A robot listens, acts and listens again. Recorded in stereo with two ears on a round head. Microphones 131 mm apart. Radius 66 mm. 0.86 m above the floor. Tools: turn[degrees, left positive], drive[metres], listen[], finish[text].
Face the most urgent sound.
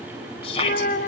Thought: The shout: about 40° left or 140° left.
Action: turn[40]
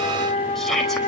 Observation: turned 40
Action: finish[Found it: a shout, straight ahead.]